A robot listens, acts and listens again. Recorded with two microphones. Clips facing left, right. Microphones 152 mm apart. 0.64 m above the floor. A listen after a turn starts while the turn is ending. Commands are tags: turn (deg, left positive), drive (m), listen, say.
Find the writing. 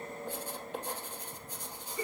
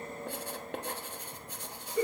<turn deg="-70"/>
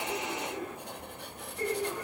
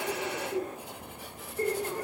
<say>Facing the writing, 1 to 2 m away.</say>